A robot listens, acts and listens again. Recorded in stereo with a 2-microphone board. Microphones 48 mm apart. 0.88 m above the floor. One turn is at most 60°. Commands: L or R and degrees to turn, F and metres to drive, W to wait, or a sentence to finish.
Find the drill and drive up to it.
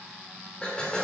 L20
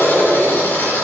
L60
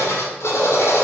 L60
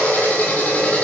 L35
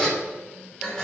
L15
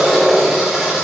F1.0
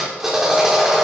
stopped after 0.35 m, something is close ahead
Something is in my way. I am facing the drill but have not reached it.